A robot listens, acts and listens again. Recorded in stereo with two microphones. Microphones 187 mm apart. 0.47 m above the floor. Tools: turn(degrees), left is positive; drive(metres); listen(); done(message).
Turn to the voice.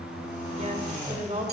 turn(degrees=-40)
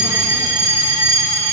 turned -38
listen()
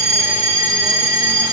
listen()
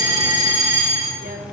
done("I heard a woman speaking, but can't make it out now. It was about straight ahead or 100° right.")